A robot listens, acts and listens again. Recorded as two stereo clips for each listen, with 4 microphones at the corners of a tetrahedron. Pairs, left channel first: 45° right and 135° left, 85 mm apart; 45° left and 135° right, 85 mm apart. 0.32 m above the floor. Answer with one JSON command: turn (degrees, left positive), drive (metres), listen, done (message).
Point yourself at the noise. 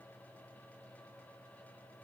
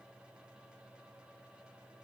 {"listen": true}
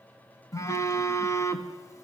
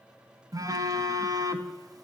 {"turn": -90}
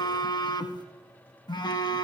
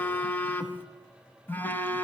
{"turn": -20}
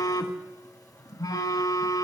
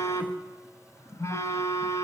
{"done": "Facing the phone buzzing."}